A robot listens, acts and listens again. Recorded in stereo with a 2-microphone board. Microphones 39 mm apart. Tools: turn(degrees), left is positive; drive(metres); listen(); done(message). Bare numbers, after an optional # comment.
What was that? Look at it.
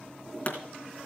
# The pop: about 40° left or 140° left.
turn(40)
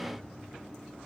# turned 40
listen()
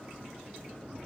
done("I heard a pop, but can't make it out now. It was about straight ahead or 100° left.")